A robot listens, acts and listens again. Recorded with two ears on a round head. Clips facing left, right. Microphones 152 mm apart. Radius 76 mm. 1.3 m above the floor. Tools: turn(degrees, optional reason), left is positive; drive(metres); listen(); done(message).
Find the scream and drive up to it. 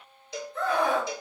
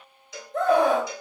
turn(degrees=-40, reason="The scream: about 40° right or 140° right.")
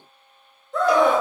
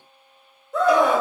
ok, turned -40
drive(metres=1.0)
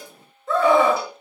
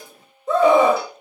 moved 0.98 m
turn(degrees=-15, reason="The scream is now 15° right.")
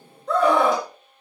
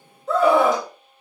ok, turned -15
drive(metres=1.0)
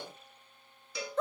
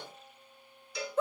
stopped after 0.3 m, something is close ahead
turn(degrees=-10, reason="The scream is now 10° right.")
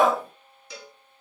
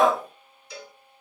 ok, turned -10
done("I am next to the scream.")